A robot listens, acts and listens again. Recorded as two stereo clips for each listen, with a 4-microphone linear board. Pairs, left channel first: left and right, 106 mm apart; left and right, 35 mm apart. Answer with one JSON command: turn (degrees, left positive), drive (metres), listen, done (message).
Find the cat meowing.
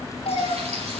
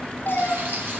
{"turn": 65}
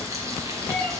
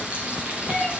{"turn": 10}
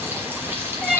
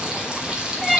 {"done": "Found it: a cat meowing, straight ahead."}